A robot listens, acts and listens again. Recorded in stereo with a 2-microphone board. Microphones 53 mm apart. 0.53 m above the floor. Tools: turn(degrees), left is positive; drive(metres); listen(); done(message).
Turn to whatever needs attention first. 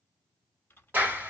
listen()
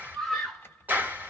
turn(degrees=30)
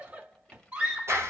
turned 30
turn(degrees=-30)
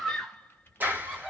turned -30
done("Found it: a scream, straight ahead, 1 to 2 m away.")